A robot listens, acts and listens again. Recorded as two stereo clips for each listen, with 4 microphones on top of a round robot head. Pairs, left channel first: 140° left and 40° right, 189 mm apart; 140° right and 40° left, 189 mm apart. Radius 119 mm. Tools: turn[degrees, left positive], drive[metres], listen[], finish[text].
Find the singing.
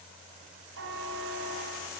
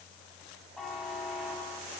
Action: listen[]
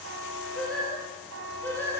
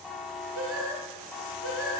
Thought: The singing: 60° left.
Action: turn[60]
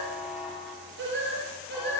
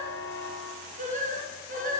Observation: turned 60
Action: finish[Facing the singing.]